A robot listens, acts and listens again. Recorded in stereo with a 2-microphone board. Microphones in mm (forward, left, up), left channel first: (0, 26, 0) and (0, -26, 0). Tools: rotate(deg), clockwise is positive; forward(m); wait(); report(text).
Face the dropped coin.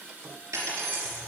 rotate(65)
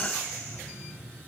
wait()
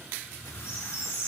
report("I heard a dropped coin, but can't make it out now. It was about straight ahead or 50° right.")